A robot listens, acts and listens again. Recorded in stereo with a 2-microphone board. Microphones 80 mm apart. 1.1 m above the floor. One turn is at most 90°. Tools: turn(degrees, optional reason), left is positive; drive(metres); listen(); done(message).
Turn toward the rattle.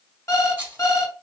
turn(degrees=-30, reason="The rattle: about 30° right or 150° right.")
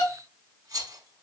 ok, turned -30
turn(degrees=-90, reason="So it is at 115° right.")
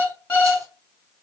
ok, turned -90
turn(degrees=-25, reason="Nothing new. It was at 25° right.")
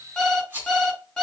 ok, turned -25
turn(degrees=-20, reason="The rattle is now 20° right.")
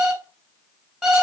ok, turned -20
listen()
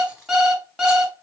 listen()
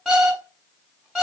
done("Facing where the rattle came from. I can't hear it now.")